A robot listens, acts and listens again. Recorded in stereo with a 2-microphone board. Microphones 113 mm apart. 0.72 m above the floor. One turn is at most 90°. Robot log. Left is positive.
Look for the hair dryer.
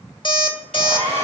cmd yaw -90
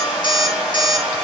note: So it is at 10° right.
cmd yaw -10
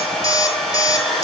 end: Facing the hair dryer.